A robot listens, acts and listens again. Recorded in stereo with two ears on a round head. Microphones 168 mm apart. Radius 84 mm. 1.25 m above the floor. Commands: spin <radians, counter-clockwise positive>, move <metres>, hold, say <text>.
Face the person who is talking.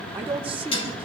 spin -0.52
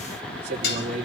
spin -2.44
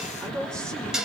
spin -0.35
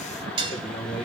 say Facing the man speaking.